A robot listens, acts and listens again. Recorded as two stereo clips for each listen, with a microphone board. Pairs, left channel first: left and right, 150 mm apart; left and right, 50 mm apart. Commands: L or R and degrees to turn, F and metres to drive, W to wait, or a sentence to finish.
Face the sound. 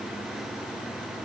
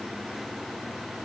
W
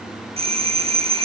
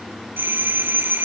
R40
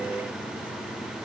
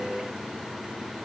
W
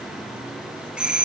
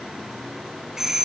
Found it: a doorbell, straight ahead.